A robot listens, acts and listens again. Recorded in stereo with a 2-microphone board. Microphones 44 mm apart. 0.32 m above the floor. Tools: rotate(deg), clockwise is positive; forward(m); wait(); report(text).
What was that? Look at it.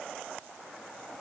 wait()
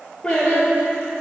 rotate(-30)
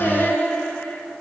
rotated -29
rotate(-140)
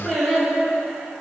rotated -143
report("Facing the singing, over 4 m away.")